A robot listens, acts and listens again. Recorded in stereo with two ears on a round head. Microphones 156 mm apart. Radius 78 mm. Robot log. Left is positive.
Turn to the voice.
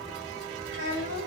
cmd yaw -90
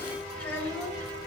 note: So it is at 10° left.
cmd yaw +10
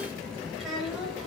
end: Facing the child speaking, over 4 m away.